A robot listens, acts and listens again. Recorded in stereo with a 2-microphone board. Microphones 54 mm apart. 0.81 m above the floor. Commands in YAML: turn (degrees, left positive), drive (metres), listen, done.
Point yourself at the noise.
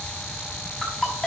turn: 30
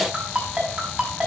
turn: -25
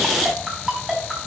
turn: -10
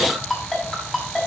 done: "Found it: a ringtone, straight ahead, over 4 m away."